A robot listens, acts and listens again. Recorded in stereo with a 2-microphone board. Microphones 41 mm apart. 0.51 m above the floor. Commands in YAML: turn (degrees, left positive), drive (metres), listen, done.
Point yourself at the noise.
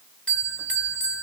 turn: 25
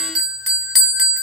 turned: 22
done: "Facing the bell, 1 to 2 m away."